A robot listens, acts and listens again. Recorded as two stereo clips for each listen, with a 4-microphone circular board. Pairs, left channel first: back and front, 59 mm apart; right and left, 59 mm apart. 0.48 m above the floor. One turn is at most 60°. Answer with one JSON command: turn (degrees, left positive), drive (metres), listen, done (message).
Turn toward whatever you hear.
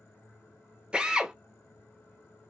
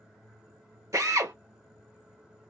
{"turn": 60}
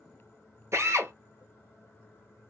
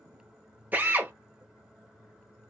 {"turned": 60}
{"turn": 30}
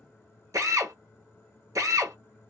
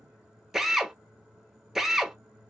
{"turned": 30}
{"done": "Facing the drill, under 1 m away."}